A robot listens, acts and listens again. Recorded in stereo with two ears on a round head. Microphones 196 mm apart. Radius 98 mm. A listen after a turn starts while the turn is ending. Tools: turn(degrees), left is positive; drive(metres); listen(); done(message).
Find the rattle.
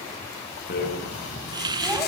turn(degrees=45)
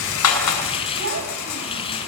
turn(degrees=85)
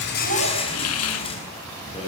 turn(degrees=25)
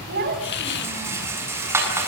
turn(degrees=-10)
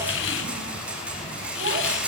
done("Facing the rattle, over 4 m away.")